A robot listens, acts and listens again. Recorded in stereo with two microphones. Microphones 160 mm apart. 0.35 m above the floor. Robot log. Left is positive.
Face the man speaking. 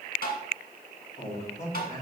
note: The man speaking: about 55° left or 125° left.
cmd yaw +55
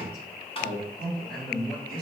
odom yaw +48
note: So it is at 70° left.
cmd yaw +70
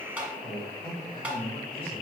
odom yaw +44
note: The man speaking is now 35° left.
cmd yaw +35
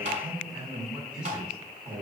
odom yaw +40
end: Facing the man speaking.